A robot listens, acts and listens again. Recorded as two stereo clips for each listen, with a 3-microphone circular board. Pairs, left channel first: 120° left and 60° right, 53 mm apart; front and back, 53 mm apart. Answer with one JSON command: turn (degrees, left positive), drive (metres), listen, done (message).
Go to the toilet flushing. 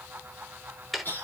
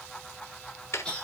{"listen": true}
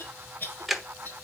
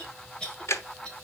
{"listen": true}
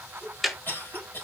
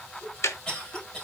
{"done": "I can't make out a toilet flushing to turn to."}